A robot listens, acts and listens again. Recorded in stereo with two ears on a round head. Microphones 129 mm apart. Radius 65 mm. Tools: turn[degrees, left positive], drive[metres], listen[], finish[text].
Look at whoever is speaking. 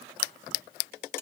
Action: listen[]
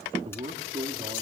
Thought: The man speaking: about 35° right or 145° right.
Action: turn[-35]
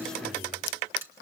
Action: listen[]
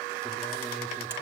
Action: listen[]
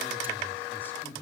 Thought: So it is at 15° left.
Action: turn[15]
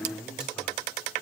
Action: finish[Found it: a man speaking, straight ahead, over 4 m away.]